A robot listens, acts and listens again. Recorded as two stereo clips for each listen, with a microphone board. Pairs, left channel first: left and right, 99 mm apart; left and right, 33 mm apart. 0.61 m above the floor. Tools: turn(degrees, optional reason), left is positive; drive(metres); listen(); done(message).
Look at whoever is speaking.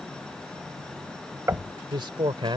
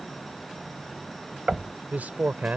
turn(degrees=-55, reason="The man speaking: about 55° right or 125° right.")
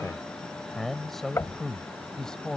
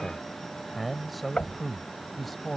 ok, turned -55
done("Found it: a man speaking, straight ahead.")